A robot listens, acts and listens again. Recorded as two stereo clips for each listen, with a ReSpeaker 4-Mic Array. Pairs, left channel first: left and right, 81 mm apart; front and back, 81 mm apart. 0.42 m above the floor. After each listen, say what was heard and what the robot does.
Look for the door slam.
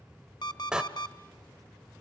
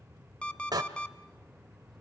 The door slam: 165° right. Turn 165° right.
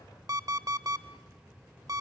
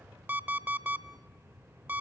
Facing where the door slam came from. I can't hear it now.